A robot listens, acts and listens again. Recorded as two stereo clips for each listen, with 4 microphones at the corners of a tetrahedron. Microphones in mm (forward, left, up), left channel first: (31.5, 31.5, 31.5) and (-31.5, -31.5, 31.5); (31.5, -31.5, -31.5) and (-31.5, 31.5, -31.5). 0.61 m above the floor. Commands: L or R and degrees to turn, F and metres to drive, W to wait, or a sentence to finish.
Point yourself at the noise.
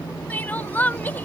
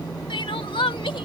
R25
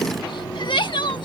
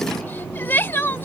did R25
L20
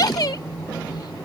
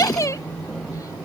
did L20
Found it: crying, straight ahead.